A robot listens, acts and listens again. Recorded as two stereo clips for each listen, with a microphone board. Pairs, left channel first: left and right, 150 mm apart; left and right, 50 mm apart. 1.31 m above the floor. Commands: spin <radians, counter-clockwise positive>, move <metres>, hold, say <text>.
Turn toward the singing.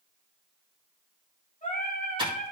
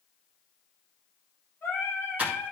spin 0.96
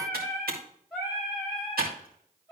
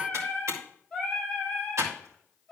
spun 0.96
spin 0.17
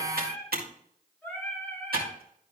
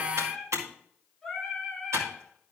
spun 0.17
spin 0.17
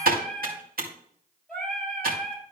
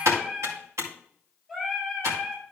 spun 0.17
say Found it: singing, straight ahead.